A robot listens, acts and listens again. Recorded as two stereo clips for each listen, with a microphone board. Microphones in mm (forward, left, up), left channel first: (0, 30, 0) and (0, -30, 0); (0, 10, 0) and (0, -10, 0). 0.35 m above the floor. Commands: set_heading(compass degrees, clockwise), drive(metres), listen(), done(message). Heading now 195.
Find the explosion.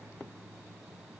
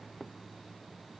listen()
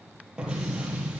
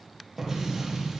set_heading(210)
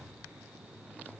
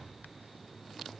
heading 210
listen()
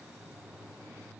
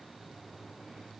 done("I heard an explosion, but can't make it out now. It was about straight ahead or 150° right.")